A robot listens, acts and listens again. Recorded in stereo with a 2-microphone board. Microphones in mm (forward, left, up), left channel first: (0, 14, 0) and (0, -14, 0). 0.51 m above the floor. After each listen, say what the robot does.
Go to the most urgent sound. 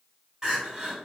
Turn 25° right.
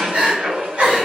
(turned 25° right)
Turn 125° right.
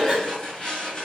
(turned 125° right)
Keep listening.
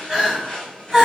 Turn 15° right.
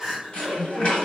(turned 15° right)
Drive 1.0 m forward.
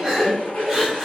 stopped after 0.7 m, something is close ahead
Arrived at the crying, straight ahead.